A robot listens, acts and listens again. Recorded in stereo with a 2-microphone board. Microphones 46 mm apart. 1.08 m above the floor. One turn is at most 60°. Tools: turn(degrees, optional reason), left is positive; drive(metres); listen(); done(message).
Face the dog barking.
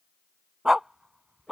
turn(degrees=-15, reason="The dog barking: about 15° right or 165° right.")
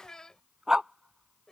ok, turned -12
turn(degrees=-30)
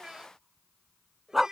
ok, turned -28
turn(degrees=-30)
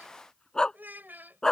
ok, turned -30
turn(degrees=15, reason="So it is at 15° left.")
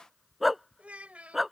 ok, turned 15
done("Facing the dog barking.")